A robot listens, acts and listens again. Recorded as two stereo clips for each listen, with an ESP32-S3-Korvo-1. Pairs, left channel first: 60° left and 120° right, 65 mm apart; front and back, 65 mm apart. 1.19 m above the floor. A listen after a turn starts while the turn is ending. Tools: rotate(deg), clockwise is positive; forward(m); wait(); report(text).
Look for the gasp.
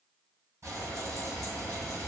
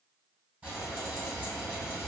wait()
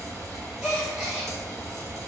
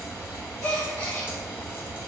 rotate(45)
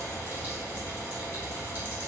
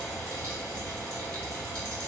report("I heard a gasp from this way, but can't make it out now.")